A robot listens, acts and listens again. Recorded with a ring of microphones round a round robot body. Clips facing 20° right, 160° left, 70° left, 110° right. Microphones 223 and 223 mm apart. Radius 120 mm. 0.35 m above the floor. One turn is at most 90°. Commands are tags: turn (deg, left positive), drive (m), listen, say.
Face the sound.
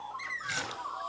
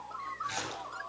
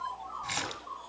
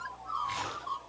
<turn deg="35"/>
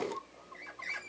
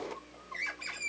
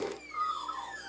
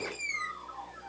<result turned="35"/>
<say>Facing where the splash came from. I can't hear it now.</say>